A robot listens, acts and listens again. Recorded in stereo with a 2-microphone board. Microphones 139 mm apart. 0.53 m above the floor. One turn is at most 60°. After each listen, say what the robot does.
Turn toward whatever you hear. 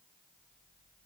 Keep listening.
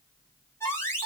Turn 20° left.
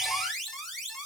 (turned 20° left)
Facing the alarm, 2 to 4 m away.